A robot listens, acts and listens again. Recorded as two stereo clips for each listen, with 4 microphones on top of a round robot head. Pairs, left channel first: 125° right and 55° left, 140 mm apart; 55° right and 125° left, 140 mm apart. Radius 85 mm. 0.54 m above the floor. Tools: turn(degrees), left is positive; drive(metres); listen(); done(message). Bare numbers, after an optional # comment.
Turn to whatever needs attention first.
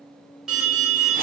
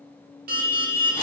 # The alarm: 140° left.
turn(140)
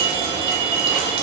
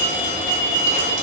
done("Found it: an alarm, straight ahead.")